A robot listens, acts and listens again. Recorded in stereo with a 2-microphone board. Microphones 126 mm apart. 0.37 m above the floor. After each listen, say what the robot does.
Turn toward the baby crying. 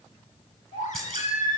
Turn 90° left.
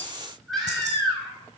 Facing the baby crying.